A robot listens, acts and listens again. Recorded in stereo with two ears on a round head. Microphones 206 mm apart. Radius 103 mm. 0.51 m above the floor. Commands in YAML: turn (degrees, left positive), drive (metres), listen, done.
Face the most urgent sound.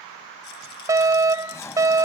turn: -30
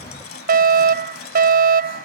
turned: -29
turn: -135
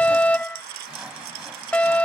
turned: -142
done: "Found it: a fire alarm, straight ahead."